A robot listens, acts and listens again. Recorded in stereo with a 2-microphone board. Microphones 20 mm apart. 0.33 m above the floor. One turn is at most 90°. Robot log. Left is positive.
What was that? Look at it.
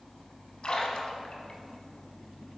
note: The splash: about 50° left or 130° left.
cmd yaw +50
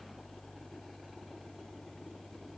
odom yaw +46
cmd idle
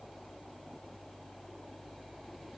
end: I heard a splash, but can't make it out now. It was about 5° left or 85° left.